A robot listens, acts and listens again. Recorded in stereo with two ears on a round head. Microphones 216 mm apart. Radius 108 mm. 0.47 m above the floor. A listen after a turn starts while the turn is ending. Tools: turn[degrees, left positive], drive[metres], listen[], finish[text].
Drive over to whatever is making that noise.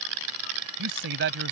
Thought: The man speaking: about 50° right or 130° right.
Action: turn[-50]
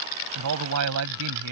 Thought: So it is at 75° right.
Action: turn[-75]
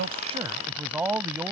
Thought: The man speaking is now 10° right.
Action: turn[-10]
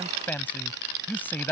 Thought: The man speaking is now 10° left.
Action: turn[10]
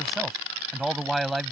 Action: drive[1.0]
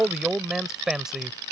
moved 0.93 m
Action: drive[1.0]
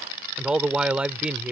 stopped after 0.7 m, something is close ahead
Action: finish[Arrived at the man speaking, straight ahead.]